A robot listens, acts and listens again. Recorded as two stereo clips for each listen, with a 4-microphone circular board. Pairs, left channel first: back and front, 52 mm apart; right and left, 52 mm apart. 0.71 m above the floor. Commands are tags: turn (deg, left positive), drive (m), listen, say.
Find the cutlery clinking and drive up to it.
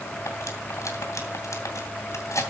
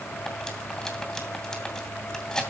<turn deg="-170"/>
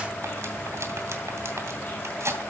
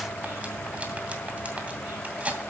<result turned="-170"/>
<turn deg="25"/>
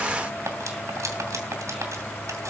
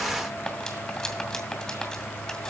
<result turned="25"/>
<turn deg="-15"/>
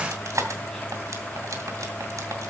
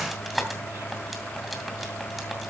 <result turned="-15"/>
<drive m="1.0"/>
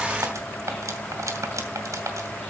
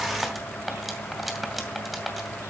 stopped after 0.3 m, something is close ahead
<say>Something is in my way. I am facing the cutlery clinking but have not reached it.</say>